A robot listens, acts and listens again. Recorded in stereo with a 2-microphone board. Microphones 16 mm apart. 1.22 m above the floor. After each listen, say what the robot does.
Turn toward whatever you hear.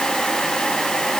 Keep listening.
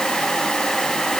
Keep listening.
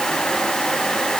I can't make out anything.